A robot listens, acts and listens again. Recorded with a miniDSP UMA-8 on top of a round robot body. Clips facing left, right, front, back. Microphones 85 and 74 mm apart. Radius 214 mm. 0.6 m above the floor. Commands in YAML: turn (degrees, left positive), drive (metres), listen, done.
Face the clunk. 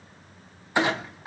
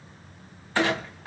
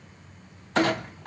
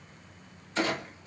turn: 15
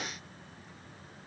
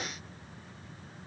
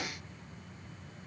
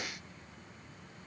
done: "I heard a clunk from this way, but can't make it out now."